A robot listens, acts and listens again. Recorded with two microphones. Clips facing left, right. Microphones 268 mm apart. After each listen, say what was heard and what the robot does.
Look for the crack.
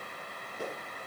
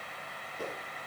Keep listening.
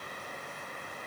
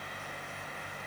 Keep listening.
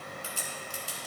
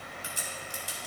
The crack: about 20° right or 160° right. Turn 20° right.
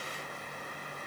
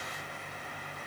Keep listening.
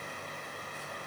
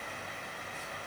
I heard a crack, but can't make it out now. It was about straight ahead or 140° right.